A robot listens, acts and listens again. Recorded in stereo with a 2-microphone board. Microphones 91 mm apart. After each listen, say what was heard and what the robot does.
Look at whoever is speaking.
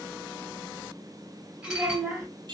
The child speaking: about 20° right or 160° right. Turn 20° right.
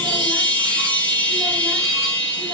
Keep listening.
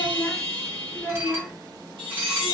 Facing the child speaking, 1 to 2 m away.